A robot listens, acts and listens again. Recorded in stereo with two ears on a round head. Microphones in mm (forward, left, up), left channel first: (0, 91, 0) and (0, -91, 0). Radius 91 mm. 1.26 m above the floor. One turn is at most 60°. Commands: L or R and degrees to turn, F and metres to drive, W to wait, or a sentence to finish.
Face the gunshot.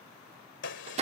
L60
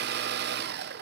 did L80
W
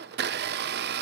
I heard a gunshot, but can't make it out now. It was about 20° right or 40° left.